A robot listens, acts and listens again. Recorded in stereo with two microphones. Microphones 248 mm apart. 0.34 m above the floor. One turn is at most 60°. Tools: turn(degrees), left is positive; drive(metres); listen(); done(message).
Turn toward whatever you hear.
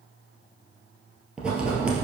turn(degrees=-30)
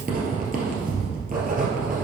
turn(degrees=-60)
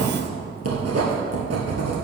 turn(degrees=-60)
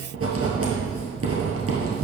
turn(degrees=-60)
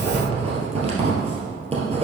turn(degrees=-25)
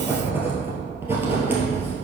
turn(degrees=-10)
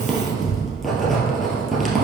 done("Facing the writing, 1 to 2 m away.")